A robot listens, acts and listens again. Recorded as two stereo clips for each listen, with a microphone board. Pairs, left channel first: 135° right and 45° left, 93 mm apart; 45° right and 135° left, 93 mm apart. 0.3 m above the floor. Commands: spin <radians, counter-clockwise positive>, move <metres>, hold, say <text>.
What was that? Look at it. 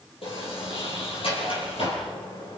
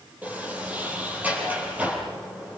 spin -2.62
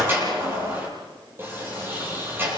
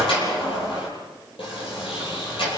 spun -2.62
spin -0.35
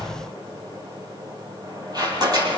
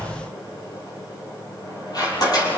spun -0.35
say Facing the sliding door.